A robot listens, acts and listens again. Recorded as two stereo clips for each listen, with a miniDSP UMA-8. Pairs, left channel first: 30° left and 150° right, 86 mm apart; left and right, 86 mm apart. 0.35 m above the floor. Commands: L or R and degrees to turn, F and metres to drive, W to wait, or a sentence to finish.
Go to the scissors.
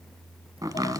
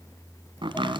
W
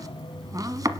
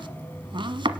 W
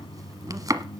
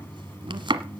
I can't make out scissors to turn to.